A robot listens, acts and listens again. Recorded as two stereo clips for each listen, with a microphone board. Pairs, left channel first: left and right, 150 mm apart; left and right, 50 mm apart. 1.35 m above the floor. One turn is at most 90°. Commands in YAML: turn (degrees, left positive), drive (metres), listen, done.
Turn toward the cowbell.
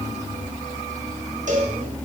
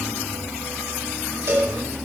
turn: -55
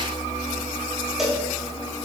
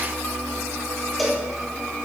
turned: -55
done: "Facing the cowbell, 1 to 2 m away."